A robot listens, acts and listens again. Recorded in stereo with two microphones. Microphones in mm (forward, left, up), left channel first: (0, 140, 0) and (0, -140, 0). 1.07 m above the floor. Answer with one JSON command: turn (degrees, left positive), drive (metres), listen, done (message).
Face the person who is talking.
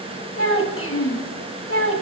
{"turn": 50}
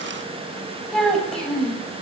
{"done": "Facing the child speaking, 1 to 2 m away."}